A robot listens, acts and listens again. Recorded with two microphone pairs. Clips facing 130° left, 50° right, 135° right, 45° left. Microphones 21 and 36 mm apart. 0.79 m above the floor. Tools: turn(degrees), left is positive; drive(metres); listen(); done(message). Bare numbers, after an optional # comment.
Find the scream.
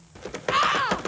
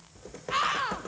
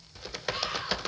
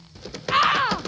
# The scream: 60° left.
turn(60)
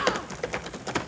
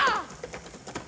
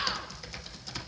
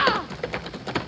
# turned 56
done("Facing the scream.")